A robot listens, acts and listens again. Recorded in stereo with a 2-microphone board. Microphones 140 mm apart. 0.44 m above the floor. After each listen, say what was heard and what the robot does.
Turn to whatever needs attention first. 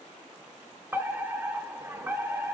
The fire alarm: about 20° right or 160° right. Turn 20° right.
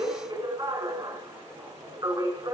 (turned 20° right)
So it is at 140° right. Turn 140° right.
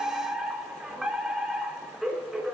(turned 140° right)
Facing the fire alarm.